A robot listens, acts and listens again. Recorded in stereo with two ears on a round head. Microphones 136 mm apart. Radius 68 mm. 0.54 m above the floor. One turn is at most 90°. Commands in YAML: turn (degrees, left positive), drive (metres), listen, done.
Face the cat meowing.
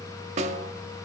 listen: true
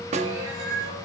turn: -90
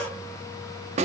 listen: true
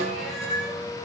done: "Found it: a cat meowing, straight ahead."